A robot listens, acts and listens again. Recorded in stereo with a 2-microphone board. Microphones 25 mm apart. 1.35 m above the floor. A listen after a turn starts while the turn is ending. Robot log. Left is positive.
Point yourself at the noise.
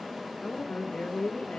note: The woman speaking: about 70° left or 110° left.
cmd yaw +70
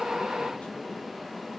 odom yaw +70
cmd idle
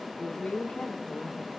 note: So it is at 70° left.
cmd yaw +70
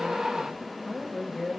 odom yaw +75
note: The woman speaking is now 10° left.
cmd yaw +10
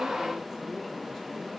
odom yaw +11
cmd idle
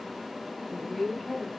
end: Facing the woman speaking, 2 to 4 m away.